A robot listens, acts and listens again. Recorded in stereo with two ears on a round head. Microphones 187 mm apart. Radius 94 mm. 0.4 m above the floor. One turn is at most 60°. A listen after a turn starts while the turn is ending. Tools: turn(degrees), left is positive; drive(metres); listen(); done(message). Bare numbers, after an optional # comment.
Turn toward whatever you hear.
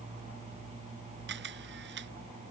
# The camera shutter: about 60° right or 120° right.
turn(-60)
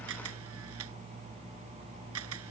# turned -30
# So it is at 90° right.
turn(-60)
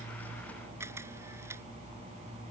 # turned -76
# The camera shutter is now 15° right.
turn(-15)
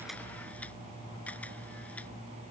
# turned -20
listen()
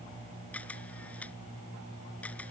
done("Facing the camera shutter.")